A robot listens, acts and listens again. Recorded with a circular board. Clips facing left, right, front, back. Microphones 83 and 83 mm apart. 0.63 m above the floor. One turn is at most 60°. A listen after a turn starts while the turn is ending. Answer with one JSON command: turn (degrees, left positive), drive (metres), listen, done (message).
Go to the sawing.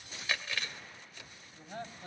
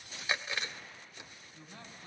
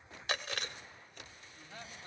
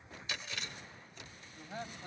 {"listen": true}
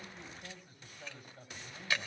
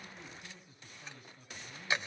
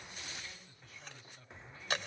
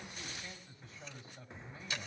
{"listen": true}
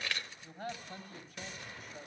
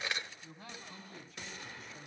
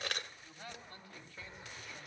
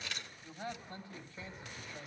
{"done": "I can't make out sawing to turn to."}